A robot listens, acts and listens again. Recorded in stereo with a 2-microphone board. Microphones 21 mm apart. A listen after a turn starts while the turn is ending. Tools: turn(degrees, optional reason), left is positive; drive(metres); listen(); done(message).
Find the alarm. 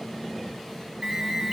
turn(degrees=-40, reason="The alarm: about 40° right or 140° right.")
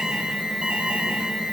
turn(degrees=-95, reason="So it is at 95° right.")
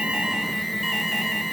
turn(degrees=-10, reason="The alarm is now 10° right.")
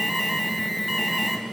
done("Found it: an alarm, straight ahead, over 4 m away.")